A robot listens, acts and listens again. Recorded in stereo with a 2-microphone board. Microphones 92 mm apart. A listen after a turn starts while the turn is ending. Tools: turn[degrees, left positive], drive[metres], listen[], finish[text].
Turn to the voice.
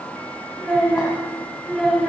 Action: turn[-30]
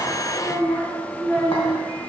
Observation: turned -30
Thought: So it is at 20° left.
Action: turn[20]
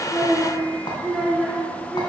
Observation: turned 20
Action: finish[Found it: a child speaking, straight ahead.]